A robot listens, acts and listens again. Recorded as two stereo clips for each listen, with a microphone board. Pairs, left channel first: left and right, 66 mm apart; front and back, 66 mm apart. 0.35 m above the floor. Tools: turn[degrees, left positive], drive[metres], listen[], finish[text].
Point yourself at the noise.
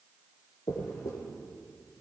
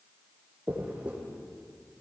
Thought: The dropped coin: 110° left.
Action: turn[110]
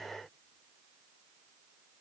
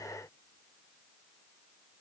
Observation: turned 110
Action: finish[I heard a dropped coin from this way, but can't make it out now.]